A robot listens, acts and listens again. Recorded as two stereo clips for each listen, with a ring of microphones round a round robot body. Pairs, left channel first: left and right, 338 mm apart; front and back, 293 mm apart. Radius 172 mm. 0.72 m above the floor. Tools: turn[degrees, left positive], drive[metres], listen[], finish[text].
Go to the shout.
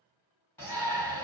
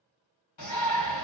Action: drive[1.0]
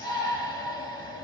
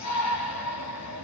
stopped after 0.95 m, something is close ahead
Thought: The shout is now 15° left.
Action: turn[15]
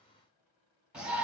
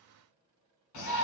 Action: finish[Arrived at the shout, straight ahead.]